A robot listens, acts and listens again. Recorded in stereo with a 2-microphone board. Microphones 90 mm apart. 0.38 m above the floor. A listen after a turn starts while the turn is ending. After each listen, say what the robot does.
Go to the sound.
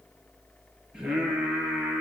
Turn 30° right.
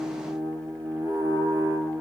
Turn 140° right.
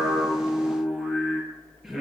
Drive 1.0 m forward.
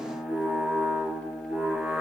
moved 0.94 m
Turn 10° right.
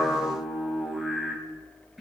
Drive 1.0 m forward.
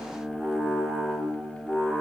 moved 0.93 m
Drive 1.0 m forward.
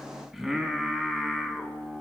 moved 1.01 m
Drive 1.0 m forward.
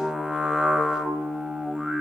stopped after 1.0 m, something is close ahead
Turn 10° right.
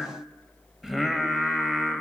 I am next to the singing.